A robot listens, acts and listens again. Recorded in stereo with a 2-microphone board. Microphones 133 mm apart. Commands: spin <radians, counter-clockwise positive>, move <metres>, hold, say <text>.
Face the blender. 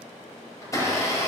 spin 0.44
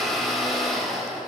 say Found it: a blender, straight ahead, 2 to 4 m away.